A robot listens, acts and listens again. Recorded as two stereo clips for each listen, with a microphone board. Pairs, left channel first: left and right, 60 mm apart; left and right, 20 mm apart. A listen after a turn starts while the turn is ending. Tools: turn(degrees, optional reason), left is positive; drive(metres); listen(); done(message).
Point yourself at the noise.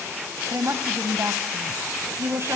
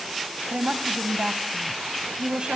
turn(degrees=-50, reason="The woman speaking: about 50° right or 130° right.")
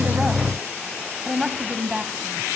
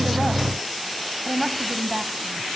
turn(degrees=-15, reason="So it is at 15° right.")
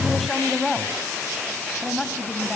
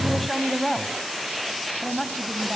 done("Found it: a woman speaking, straight ahead.")